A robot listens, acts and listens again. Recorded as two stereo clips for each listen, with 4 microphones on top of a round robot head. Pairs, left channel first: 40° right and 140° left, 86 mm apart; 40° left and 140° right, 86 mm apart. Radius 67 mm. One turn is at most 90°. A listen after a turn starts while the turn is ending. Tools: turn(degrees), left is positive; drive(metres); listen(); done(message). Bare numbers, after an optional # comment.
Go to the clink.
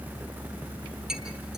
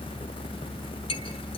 # The clink: 55° left.
turn(55)
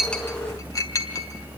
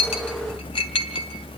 # The clink is now 15° left.
turn(15)
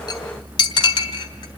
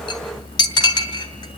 drive(1.0)
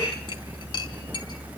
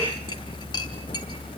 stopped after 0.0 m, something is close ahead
listen()
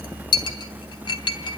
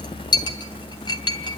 done("Something is in my way. I am facing the clink but have not reached it.")